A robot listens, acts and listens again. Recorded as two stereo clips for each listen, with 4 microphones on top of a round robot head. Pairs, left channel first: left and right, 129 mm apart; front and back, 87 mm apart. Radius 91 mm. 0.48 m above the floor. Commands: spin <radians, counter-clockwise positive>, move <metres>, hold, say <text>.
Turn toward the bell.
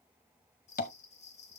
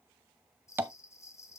spin 0.96
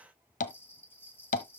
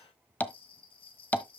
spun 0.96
spin 0.26
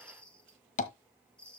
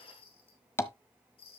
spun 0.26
spin 0.17
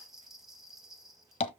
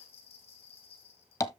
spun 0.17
say Facing the bell, 2 to 4 m away.